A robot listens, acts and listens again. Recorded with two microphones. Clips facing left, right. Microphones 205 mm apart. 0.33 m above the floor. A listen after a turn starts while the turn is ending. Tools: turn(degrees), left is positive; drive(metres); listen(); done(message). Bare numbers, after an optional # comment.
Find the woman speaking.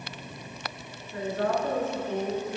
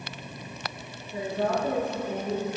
turn(-30)
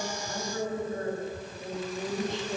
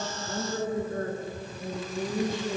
# So it is at 130° right.
turn(-130)
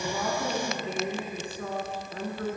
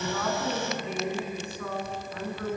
# The woman speaking is now 35° left.
turn(35)
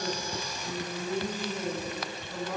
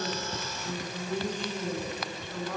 # The woman speaking is now 10° left.
turn(10)
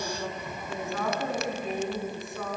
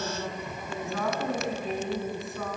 done("Facing the woman speaking.")